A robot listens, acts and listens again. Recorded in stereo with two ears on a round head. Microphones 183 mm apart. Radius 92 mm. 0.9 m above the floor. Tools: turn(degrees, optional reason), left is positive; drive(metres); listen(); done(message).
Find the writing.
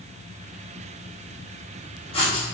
turn(degrees=30, reason="The writing: about 30° left or 150° left.")
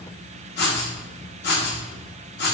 turn(degrees=125, reason="So it is at 125° left.")
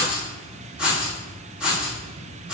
done("Found it: writing, straight ahead, 1 to 2 m away.")